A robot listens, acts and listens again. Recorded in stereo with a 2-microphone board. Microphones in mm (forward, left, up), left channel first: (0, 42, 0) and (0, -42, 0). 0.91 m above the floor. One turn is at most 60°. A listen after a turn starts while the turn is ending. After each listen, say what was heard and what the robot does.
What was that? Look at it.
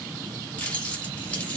The keys jangling: about 15° left or 165° left. Turn 15° left.
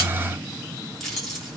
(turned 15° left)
Found it: keys jangling, straight ahead.